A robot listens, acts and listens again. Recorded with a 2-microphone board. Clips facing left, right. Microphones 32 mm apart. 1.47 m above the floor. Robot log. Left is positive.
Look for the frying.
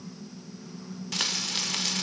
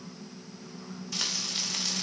note: The frying: about 60° left or 120° left.
cmd yaw +60
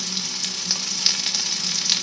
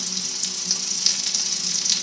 note: So it is at 35° left.
cmd yaw +35
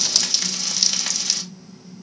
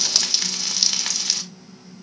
note: The frying is now 15° right.
cmd yaw -15
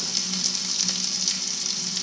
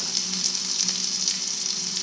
end: Found it: frying, straight ahead.